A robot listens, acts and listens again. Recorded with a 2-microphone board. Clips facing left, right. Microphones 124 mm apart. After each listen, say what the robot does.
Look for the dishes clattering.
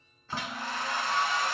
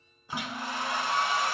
Turn 30° left.
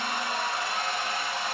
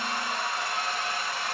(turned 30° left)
Keep listening.
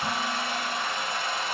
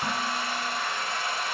Keep listening.
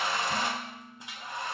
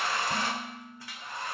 Turn 20° right.
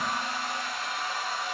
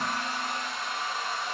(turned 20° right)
Keep listening.
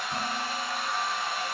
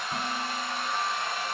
Keep listening.
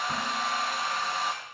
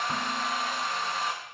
I heard dishes clattering from this way, but can't make it out now.